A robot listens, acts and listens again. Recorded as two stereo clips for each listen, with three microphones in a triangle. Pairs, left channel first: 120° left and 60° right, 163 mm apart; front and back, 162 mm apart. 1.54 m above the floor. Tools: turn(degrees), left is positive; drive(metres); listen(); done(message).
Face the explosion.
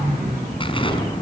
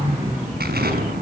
turn(degrees=175)
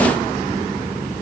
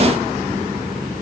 done("I heard an explosion from this way, but can't make it out now.")